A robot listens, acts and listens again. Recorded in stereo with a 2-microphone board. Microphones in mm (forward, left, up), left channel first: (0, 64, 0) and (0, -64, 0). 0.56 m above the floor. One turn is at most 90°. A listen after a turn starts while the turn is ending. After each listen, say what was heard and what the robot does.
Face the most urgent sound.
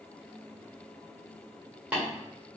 Keep listening.
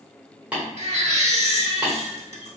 The baby crying: about 55° right or 125° right. Turn 55° right.
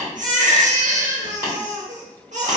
So it is at 70° right. Turn 70° right.
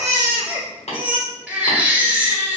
The baby crying is now 15° right. Turn 15° right.
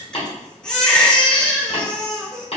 Facing the baby crying.